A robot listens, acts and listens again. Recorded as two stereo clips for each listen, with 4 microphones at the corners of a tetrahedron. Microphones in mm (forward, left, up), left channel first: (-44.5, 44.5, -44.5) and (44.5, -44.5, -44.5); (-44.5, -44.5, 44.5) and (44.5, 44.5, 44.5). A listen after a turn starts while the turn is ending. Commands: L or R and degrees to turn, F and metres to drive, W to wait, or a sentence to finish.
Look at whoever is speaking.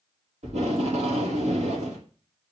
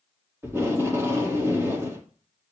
W
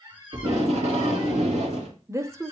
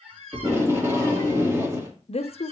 R110
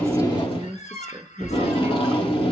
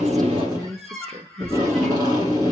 L15
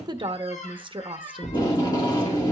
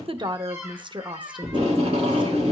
Facing the woman speaking.